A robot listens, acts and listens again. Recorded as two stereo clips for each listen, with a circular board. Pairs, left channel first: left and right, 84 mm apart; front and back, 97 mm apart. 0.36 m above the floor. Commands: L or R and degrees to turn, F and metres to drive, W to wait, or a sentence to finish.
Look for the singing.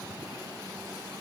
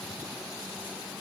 W
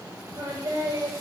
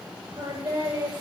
R140
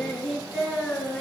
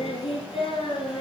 Found it: singing, straight ahead, 2 to 4 m away.